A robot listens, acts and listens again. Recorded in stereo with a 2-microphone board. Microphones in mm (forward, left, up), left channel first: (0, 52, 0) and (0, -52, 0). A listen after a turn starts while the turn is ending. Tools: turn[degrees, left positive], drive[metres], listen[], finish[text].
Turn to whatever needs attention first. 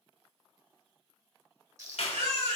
Action: turn[-90]
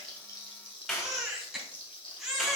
Action: finish[Facing the baby crying, 2 to 4 m away.]